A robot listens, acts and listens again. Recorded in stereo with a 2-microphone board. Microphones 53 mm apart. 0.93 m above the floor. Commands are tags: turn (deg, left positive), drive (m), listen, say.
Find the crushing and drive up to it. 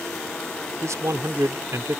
<listen/>
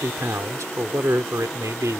<listen/>
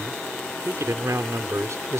<say>I can't make out crushing to turn to.</say>